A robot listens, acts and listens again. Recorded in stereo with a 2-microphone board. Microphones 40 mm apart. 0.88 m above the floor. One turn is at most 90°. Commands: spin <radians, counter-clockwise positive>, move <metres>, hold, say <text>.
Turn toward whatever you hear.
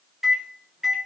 spin -0.52
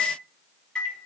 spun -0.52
spin 0.35
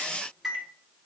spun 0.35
say Facing the microwave.